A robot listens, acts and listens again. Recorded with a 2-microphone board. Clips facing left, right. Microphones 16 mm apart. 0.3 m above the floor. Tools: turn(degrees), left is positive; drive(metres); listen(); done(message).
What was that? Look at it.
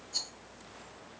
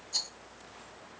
turn(degrees=-35)
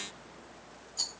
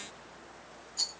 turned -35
done("Facing the rattle.")